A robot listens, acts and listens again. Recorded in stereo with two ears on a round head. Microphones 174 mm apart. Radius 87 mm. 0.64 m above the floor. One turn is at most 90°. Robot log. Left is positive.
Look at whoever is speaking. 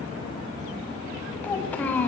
cmd yaw +30
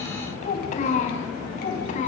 note: So it is at 140° left.
cmd yaw +90
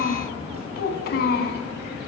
note: The child speaking is now 50° left.
cmd yaw +50
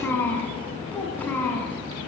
note: The child speaking is now 10° left.
cmd yaw +10
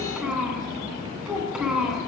end: Found it: a child speaking, straight ahead, over 4 m away.